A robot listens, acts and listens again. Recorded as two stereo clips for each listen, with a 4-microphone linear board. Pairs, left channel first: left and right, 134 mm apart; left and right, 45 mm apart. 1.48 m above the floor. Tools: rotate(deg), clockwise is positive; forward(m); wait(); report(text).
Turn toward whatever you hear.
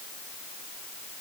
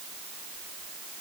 wait()
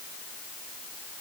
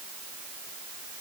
wait()
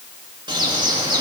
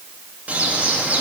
rotate(35)
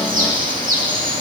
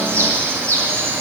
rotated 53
rotate(90)
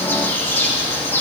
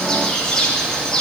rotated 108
rotate(-15)
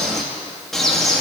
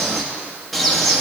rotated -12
report("Facing the bird.")